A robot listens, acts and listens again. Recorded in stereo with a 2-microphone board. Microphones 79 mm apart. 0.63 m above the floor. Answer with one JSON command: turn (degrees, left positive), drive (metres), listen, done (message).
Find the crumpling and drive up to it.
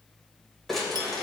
{"turn": 30}
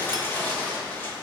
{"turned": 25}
{"turn": 155}
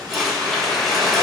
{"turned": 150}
{"drive": 1.0}
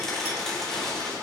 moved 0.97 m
{"listen": true}
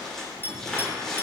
{"turn": 10}
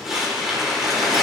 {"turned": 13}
{"drive": 1.0}
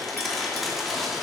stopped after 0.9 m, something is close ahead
{"done": "Arrived at the crumpling, straight ahead."}